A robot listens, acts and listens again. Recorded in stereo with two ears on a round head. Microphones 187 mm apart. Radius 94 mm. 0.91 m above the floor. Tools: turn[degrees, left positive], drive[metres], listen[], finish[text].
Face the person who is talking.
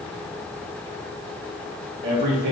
Thought: The man speaking: about 55° right or 125° right.
Action: turn[-55]
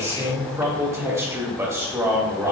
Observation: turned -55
Thought: So it is at 15° right.
Action: turn[-15]
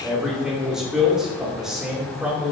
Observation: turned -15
Action: finish[Found it: a man speaking, straight ahead.]